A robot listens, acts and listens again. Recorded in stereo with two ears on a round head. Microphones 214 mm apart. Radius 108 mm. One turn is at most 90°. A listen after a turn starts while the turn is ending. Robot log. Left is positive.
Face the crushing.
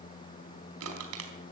note: The crushing: about 70° right or 110° right.
cmd yaw -70
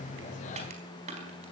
note: So it is at 30° right.
cmd yaw -30
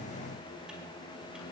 cmd idle
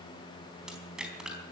end: Facing the crushing, over 4 m away.